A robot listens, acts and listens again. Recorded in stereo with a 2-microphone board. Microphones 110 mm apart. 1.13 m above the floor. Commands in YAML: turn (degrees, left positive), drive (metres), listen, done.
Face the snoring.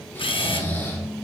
turn: 20
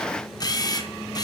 listen: true
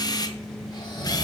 turn: 140
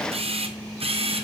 listen: true
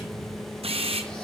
listen: true
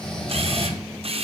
turn: 10
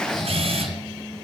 done: "Facing the snoring, 1 to 2 m away."